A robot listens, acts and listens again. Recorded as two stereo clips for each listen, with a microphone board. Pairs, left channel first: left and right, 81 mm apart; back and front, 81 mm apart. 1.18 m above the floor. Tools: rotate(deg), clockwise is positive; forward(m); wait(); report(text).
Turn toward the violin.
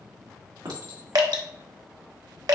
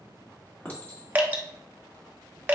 wait()
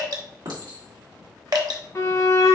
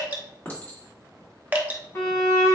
rotate(-130)
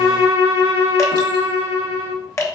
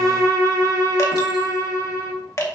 rotate(30)
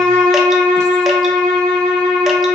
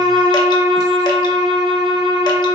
rotate(-20)
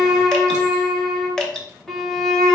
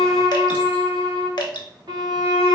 report("Facing the violin, 1 to 2 m away.")